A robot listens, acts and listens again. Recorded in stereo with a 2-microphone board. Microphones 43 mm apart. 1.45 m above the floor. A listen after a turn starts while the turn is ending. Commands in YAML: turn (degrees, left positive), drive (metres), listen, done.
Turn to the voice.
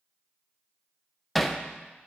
listen: true
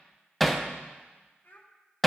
turn: 45
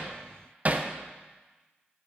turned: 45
listen: true
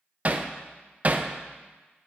listen: true
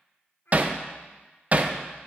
turn: 90
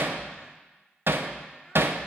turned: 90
listen: true
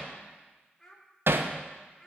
turn: 15
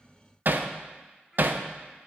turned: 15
listen: true
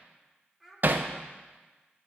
done: "Found it: a child speaking, straight ahead, 2 to 4 m away."